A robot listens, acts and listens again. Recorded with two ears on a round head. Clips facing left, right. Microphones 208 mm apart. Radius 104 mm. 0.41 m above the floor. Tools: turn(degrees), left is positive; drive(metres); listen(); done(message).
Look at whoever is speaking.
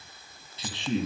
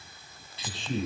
turn(degrees=55)
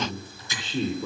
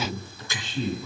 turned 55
turn(degrees=70)
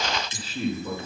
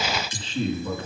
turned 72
turn(degrees=10)
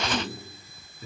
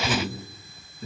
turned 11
done("Found it: a man speaking, straight ahead, over 4 m away.")